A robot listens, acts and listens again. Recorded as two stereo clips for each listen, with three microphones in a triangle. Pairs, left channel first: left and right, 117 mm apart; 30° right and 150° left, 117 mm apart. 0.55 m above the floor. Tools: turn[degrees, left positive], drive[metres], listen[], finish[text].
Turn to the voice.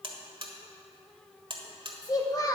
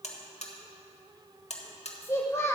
Thought: The child speaking: 35° left.
Action: turn[35]
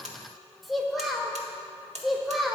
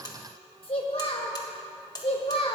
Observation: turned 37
Action: finish[Found it: a child speaking, straight ahead.]